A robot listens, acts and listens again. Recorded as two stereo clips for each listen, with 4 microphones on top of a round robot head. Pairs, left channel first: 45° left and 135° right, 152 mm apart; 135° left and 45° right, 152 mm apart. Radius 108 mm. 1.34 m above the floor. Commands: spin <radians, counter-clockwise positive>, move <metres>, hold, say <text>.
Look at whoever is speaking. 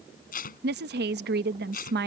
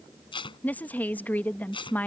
spin -2.44
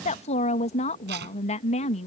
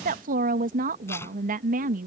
say Found it: a woman speaking, straight ahead.